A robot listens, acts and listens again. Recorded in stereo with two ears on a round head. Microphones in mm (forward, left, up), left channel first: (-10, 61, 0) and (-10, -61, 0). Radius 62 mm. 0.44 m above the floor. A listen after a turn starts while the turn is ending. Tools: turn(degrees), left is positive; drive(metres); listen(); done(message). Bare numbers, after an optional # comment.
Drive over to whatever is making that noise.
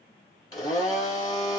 # The blender: about 25° left or 155° left.
turn(25)
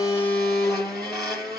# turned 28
drive(1.0)
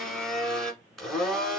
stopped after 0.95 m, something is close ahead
done("Arrived at the blender, straight ahead.")